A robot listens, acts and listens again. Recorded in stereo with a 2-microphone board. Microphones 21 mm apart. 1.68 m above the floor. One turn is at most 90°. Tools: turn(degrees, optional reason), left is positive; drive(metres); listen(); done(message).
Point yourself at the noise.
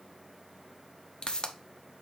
turn(degrees=35, reason="The pop: about 35° left or 145° left.")
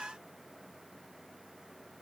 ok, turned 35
listen()
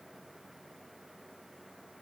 done("I heard a pop, but can't make it out now. It was about straight ahead or 110° left.")